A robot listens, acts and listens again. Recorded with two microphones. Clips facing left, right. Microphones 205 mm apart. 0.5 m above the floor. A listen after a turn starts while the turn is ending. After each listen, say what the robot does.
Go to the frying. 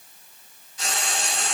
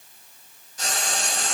Turn 45° right.
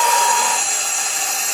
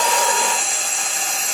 Drive 1.0 m forward.
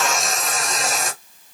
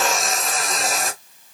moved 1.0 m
Drive 1.0 m forward.
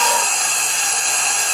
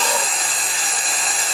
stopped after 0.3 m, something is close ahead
I am next to the frying.